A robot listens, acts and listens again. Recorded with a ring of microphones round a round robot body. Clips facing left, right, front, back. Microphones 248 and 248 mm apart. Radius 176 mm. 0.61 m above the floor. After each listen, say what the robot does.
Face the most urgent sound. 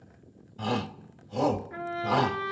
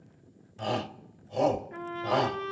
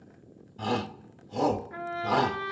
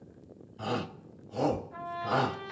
Turn 30° left.
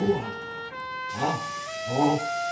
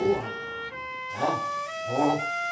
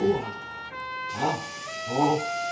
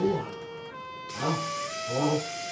Found it: a shout, straight ahead.